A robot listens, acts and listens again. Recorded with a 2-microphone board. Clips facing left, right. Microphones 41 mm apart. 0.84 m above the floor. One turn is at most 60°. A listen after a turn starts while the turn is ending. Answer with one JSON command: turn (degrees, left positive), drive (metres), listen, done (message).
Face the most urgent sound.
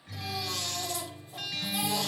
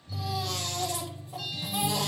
{"turn": -60}
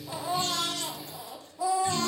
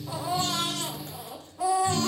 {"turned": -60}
{"turn": -60}
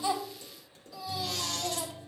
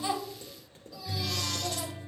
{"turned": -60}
{"turn": 10}
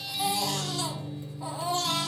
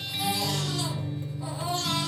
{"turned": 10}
{"done": "Facing the baby crying."}